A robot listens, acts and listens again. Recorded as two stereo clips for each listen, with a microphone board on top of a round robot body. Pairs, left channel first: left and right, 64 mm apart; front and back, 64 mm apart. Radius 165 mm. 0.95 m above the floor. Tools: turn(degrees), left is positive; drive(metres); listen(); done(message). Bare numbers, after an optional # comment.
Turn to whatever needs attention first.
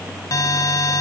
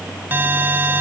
# The alarm: 120° left.
turn(120)
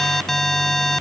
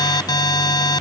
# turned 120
done("Found it: an alarm, straight ahead.")